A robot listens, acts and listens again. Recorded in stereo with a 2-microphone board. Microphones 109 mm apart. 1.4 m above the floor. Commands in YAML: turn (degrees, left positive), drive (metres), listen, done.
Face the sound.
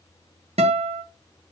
turn: -70
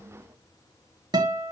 turn: -40
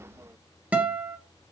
turn: -15
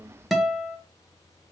done: "Found it: a guitar, straight ahead."